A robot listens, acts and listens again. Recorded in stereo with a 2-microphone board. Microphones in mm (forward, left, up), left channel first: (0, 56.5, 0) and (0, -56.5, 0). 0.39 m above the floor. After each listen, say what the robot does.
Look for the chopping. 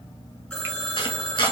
Turn 40° left.
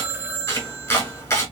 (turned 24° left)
Turn 25° left.
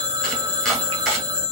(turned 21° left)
Facing the chopping.